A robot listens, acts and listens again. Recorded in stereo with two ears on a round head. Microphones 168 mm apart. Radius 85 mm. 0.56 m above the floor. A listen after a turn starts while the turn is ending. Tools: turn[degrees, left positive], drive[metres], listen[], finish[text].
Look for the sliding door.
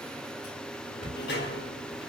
Thought: The sliding door: about 60° left or 120° left.
Action: turn[60]
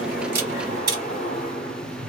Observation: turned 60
Thought: So it is at 45° left.
Action: turn[45]
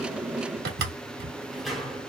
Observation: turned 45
Action: finish[Facing the sliding door.]